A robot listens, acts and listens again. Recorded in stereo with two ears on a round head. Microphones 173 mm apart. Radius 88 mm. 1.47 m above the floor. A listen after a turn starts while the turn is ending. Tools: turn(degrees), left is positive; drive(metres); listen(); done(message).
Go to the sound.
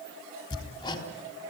turn(degrees=20)
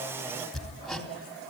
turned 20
drive(metres=1.0)
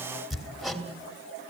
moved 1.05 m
drive(metres=1.0)
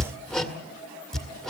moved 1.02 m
drive(metres=1.0)
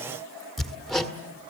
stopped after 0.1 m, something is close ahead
done("Arrived at the hammering, straight ahead.")